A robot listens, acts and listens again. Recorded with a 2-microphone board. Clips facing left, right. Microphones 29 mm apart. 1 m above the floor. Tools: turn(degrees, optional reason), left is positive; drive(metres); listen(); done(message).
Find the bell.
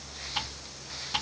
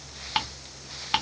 listen()
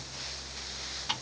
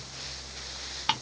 listen()
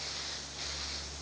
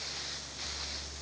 done("I can't make out a bell, only ticking.")